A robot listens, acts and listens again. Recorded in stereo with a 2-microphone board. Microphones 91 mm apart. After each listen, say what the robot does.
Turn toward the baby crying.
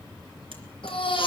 Turn 90° left.
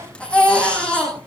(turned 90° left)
Turn 10° left.
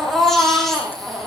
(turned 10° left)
Facing the baby crying.